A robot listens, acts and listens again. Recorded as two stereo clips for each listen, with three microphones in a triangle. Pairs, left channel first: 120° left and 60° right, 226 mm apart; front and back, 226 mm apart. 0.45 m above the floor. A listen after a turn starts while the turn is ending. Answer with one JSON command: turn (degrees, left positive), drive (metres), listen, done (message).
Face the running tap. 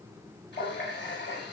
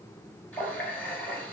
{"turn": 85}
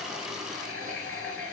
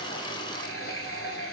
{"turn": -10}
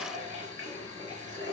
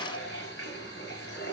{"done": "Facing the running tap, over 4 m away."}